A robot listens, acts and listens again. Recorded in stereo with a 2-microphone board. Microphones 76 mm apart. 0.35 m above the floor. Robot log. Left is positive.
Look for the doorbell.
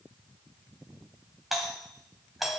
cmd yaw +30
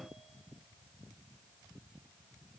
cmd idle
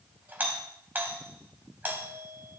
note: So it is at 30° right.
cmd yaw -30
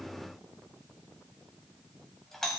end: Found it: a doorbell, straight ahead, 2 to 4 m away.